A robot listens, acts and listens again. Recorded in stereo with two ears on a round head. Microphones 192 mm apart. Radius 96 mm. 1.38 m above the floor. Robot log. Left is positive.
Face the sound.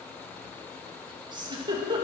note: The giggle: about 20° right or 160° right.
cmd yaw -20
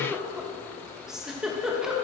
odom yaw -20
end: Facing the giggle.